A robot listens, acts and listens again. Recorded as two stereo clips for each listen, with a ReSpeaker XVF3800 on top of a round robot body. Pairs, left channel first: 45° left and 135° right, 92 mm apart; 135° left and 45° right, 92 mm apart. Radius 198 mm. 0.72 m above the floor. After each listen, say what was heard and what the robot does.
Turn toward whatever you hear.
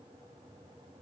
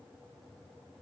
Keep listening.
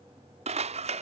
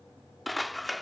The scissors: 135° right. Turn 135° right.
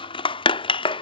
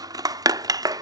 The scissors is now 10° left. Turn 10° left.
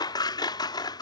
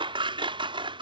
Facing the scissors.